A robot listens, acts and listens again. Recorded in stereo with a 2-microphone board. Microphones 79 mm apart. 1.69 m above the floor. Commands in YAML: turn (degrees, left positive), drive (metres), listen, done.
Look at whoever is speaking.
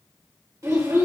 turn: -40
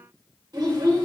turn: -90
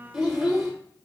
turn: -10
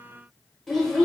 done: "Found it: a child speaking, straight ahead."